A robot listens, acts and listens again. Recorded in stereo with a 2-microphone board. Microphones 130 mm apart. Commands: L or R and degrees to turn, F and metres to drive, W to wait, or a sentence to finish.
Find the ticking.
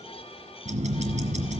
R65
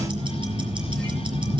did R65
R45
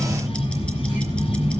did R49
Found it: ticking, straight ahead, 2 to 4 m away.